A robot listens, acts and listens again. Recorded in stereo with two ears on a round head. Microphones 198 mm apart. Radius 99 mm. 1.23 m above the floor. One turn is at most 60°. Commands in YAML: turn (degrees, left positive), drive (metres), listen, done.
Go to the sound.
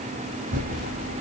turn: -40
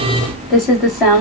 drive: 1.0
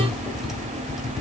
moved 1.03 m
drive: 1.0
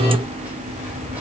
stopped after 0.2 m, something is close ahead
listen: true
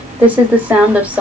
turn: -10
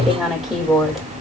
done: "Arrived at the typing on a keyboard, straight ahead."